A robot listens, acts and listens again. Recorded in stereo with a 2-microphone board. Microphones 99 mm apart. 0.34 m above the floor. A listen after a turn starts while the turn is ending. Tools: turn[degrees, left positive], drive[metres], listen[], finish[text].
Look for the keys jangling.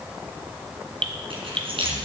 Thought: The keys jangling: about 70° right or 110° right.
Action: turn[-70]
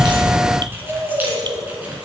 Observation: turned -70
Action: listen[]
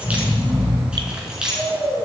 Thought: So it is at 10° right.
Action: turn[-10]
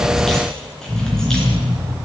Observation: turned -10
Action: listen[]
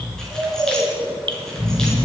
Action: listen[]
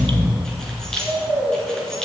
Action: finish[Facing the keys jangling, 2 to 4 m away.]